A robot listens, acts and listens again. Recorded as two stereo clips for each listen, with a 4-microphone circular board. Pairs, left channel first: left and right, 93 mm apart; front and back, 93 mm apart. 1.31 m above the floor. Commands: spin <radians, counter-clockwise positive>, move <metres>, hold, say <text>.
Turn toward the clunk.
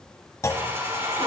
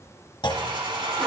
spin 0.61
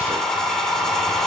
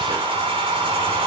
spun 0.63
say I heard a clunk from this way, but can't make it out now.